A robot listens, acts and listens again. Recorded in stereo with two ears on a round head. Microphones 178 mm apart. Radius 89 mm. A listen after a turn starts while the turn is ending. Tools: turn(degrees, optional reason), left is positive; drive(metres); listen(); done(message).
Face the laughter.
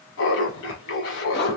turn(degrees=65, reason="The laughter: about 65° left or 115° left.")
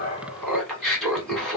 done("Found it: laughter, straight ahead, 1 to 2 m away.")